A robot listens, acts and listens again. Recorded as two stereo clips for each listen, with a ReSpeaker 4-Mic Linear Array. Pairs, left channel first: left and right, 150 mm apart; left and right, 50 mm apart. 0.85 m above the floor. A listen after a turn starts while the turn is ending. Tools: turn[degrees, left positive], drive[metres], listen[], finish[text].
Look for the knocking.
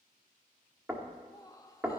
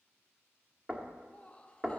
Action: turn[-30]
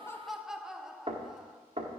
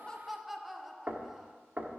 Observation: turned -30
Thought: So it is at 140° right.
Action: turn[-140]
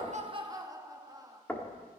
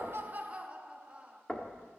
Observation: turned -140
Thought: The knocking is now 10° left.
Action: turn[10]
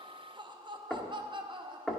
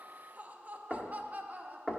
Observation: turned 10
Action: finish[Facing the knocking, 1 to 2 m away.]